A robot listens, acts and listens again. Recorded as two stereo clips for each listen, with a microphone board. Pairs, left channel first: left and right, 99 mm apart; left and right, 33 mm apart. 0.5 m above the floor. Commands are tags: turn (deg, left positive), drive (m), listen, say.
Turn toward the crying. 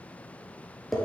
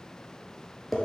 <listen/>
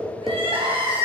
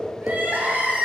<turn deg="-70"/>
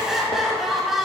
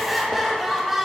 <say>Found it: crying, straight ahead.</say>